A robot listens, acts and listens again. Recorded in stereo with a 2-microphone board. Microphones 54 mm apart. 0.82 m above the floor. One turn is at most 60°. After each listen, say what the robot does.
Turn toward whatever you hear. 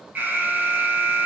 Turn 35° right.
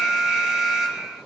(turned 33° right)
Found it: an alarm, straight ahead.